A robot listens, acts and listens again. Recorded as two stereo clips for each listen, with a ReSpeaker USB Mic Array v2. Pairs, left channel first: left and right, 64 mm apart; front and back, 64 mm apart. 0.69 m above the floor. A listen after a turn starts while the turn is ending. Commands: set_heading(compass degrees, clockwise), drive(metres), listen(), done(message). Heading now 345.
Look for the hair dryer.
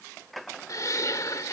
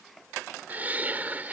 listen()
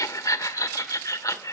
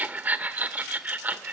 listen()
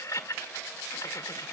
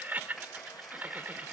done("I can't make out a hair dryer to turn to.")